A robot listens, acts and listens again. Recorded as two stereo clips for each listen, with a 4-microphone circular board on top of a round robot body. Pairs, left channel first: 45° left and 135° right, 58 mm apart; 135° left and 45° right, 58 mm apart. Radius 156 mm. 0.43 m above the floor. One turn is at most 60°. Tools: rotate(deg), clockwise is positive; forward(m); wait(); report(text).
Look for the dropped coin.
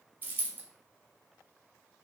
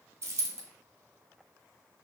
rotate(60)
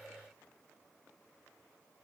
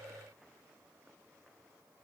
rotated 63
rotate(15)
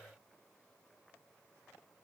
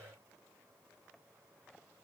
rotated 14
report("Facing where the dropped coin came from. I can't hear it now.")